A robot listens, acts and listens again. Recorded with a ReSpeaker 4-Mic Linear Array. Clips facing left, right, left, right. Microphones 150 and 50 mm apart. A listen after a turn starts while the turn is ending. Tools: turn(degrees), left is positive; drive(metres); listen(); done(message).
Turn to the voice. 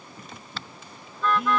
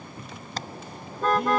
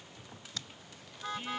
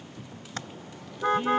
listen()
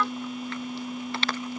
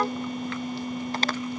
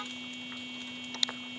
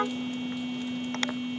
listen()
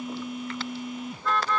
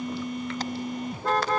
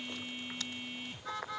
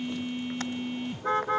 done("I can't make out anyone speaking, only a phone buzzing and a car horn.")